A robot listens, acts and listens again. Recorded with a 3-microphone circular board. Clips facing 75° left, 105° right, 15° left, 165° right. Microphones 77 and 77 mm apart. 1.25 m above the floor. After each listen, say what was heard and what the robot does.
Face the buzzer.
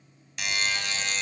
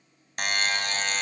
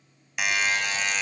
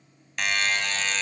The buzzer: 65° right. Turn 65° right.
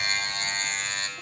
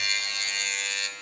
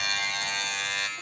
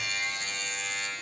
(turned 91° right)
The buzzer is now 25° left. Turn 25° left.
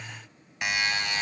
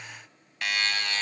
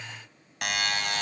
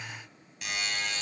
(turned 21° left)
Found it: a buzzer, straight ahead, 2 to 4 m away.